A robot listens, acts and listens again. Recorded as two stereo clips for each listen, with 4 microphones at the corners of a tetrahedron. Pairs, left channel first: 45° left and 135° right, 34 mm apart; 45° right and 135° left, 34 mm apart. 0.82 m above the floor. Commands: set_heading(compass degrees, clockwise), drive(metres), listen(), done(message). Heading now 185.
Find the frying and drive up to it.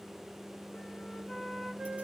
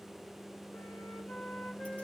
listen()
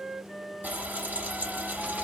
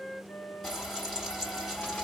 set_heading(310)
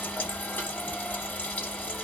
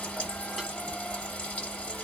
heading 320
set_heading(310)
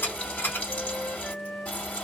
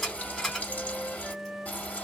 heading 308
drive(1.0)
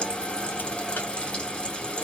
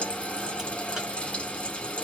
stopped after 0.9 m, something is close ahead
done("Arrived at the frying, straight ahead.")